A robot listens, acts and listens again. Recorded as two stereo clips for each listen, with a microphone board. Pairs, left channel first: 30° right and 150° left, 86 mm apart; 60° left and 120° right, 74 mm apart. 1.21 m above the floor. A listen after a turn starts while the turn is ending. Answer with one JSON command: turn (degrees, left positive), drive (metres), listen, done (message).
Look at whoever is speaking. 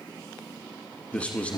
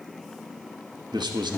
{"turn": -105}
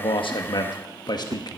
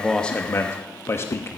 {"done": "Found it: a man speaking, straight ahead."}